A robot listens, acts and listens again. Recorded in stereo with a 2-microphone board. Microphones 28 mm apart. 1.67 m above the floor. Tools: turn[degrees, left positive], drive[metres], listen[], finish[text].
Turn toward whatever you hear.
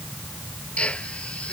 Thought: The drill: about 50° left or 130° left.
Action: turn[50]
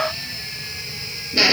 Action: finish[Facing the drill.]